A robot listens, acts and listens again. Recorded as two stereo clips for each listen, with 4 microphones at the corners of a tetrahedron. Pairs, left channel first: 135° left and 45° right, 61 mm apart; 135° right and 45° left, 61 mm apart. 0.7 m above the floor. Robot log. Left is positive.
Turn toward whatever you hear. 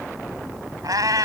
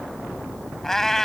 note: The cat meowing: 50° right.
cmd yaw -50
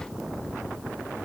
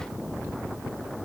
cmd idle
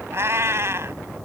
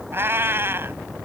end: Found it: a cat meowing, straight ahead.